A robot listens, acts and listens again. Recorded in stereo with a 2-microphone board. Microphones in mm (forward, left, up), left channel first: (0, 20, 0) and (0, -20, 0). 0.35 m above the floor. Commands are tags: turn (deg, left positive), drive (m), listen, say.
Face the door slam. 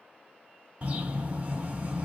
<listen/>
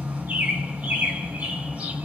<listen/>
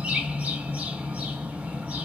<say>I can't make out a door slam to turn to.</say>